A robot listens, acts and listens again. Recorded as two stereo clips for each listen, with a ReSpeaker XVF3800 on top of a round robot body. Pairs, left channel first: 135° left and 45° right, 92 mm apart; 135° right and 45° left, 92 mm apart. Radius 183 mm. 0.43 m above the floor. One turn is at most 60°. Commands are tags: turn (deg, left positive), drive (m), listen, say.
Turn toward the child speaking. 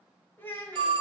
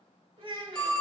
<turn deg="60"/>
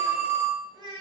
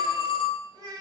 <say>Facing the child speaking, 2 to 4 m away.</say>